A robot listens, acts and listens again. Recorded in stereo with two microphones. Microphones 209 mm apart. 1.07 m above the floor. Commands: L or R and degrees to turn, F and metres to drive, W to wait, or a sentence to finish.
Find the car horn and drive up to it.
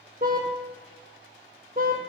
R45
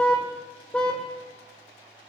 F1.0
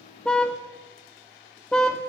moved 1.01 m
F1.0
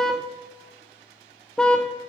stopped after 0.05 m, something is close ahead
Arrived at the car horn, straight ahead.